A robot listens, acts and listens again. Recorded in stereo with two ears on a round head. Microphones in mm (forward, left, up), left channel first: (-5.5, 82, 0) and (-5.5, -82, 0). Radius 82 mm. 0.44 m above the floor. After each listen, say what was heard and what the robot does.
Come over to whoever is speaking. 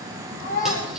The child speaking: about 45° left or 135° left. Turn 45° left.
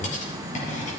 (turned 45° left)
Keep listening.
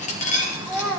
Drive 1.0 m forward.
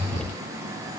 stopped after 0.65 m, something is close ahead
Keep listening.
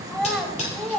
Blocked. The child speaking is further on, straight ahead.